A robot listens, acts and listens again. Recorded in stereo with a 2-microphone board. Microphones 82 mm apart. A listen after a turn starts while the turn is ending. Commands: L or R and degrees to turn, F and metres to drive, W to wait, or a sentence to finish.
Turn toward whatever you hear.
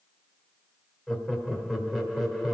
R30
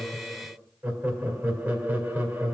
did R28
R145
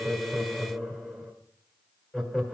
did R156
L10
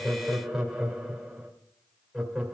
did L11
Found it: laughter, straight ahead, 1 to 2 m away.